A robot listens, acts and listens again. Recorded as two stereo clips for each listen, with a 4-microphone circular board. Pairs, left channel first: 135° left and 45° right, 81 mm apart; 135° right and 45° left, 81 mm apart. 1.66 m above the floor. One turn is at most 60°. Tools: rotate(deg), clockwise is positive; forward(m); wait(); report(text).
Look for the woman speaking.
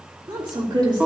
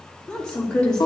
rotate(55)
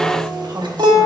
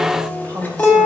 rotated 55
report("Facing the woman speaking, 2 to 4 m away.")